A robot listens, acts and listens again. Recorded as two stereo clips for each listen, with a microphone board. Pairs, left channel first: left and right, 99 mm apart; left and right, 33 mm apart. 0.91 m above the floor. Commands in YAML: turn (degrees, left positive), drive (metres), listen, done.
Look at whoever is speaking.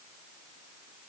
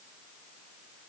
listen: true
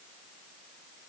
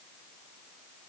listen: true
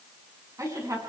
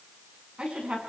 turn: -35
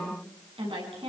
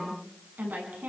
turn: -115
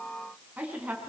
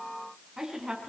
turn: -15
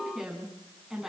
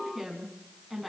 done: "Found it: a woman speaking, straight ahead, over 4 m away."